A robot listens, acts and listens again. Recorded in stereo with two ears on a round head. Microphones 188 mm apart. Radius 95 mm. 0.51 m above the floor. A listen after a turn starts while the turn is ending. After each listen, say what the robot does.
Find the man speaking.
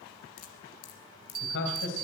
Turn 65° left.
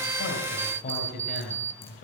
Turn 40° left.
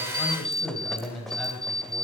Found it: a man speaking, straight ahead, 2 to 4 m away.